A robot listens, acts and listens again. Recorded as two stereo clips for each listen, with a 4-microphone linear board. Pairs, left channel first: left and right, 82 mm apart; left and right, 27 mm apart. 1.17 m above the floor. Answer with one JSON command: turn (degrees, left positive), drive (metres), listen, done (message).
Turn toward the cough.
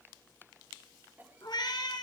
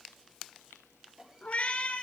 {"turn": -20}
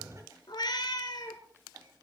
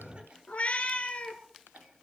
{"listen": true}
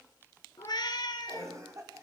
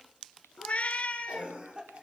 {"turn": -140}
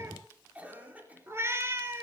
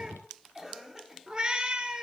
{"turn": -20}
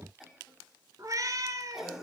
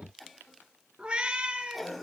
{"done": "Found it: a cough, straight ahead, 2 to 4 m away."}